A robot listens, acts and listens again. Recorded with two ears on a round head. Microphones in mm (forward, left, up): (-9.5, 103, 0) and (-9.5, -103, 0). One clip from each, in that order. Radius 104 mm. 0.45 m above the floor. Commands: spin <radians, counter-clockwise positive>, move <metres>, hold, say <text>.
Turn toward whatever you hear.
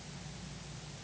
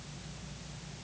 hold
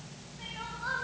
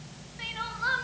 spin -1.05
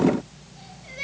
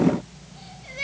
spin -0.17
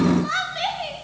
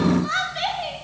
say Facing the crying.